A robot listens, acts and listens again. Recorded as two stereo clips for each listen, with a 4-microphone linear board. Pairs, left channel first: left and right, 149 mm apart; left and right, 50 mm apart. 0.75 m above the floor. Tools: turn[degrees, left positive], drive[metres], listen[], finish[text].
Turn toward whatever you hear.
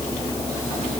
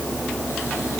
Action: listen[]
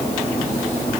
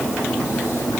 Action: listen[]
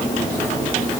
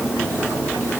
Action: finish[I can't make out anything.]